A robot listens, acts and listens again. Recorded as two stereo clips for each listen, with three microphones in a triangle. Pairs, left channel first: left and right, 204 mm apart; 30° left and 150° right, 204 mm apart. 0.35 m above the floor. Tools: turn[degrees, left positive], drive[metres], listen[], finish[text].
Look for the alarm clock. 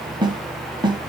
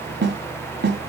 Action: listen[]
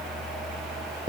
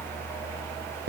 Action: listen[]
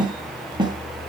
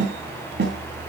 Action: finish[I can't make out an alarm clock to turn to.]